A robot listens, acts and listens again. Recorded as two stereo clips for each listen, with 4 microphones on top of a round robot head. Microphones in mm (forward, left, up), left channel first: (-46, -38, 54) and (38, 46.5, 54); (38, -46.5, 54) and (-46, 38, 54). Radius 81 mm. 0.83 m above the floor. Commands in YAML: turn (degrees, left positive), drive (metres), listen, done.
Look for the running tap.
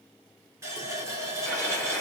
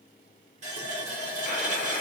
turn: 110
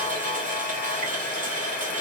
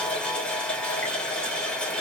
turn: 35
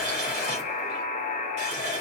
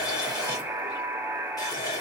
turn: 15
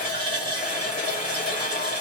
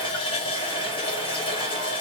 done: "Facing the running tap."